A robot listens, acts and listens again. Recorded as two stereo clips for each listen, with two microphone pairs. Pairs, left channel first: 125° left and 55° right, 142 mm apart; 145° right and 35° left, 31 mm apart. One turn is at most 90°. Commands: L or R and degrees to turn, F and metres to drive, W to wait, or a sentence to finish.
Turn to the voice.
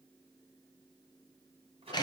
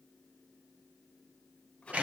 W
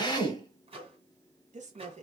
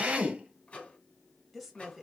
R60
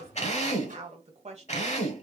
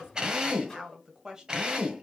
R30
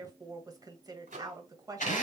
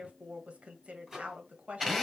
Found it: a woman speaking, straight ahead.